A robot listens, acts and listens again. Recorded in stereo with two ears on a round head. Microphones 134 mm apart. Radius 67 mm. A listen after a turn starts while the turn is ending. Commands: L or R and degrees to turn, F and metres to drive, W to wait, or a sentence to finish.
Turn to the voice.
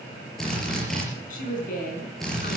L60
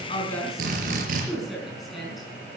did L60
Facing the woman speaking.